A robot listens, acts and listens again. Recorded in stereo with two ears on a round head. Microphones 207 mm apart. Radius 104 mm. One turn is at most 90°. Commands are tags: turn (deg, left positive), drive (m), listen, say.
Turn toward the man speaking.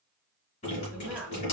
<turn deg="-30"/>
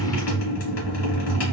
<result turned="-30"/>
<listen/>
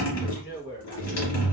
<turn deg="50"/>
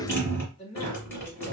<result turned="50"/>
<turn deg="25"/>
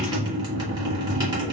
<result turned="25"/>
<listen/>
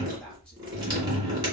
<listen/>
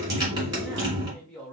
<say>Found it: a man speaking, straight ahead, 2 to 4 m away.</say>